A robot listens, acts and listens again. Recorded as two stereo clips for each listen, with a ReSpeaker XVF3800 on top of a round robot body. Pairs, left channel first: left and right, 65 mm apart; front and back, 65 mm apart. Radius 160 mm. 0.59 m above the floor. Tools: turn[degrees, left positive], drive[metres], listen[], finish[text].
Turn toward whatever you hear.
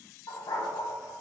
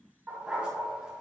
Thought: The dog barking: 100° left.
Action: turn[100]
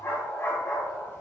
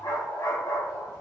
Thought: The dog barking is now 35° left.
Action: turn[35]
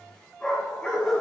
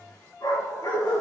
Thought: The dog barking is now 10° left.
Action: turn[10]
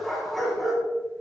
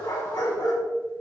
Action: finish[Facing the dog barking.]